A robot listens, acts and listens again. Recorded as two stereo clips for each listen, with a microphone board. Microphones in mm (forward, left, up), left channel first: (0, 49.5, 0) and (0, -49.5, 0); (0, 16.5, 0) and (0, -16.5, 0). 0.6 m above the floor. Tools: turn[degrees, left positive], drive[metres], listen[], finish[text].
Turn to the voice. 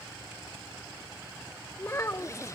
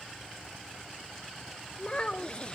Thought: The child speaking: about 30° left or 150° left.
Action: turn[30]
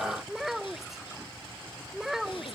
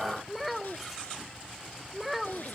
Action: finish[Facing the child speaking.]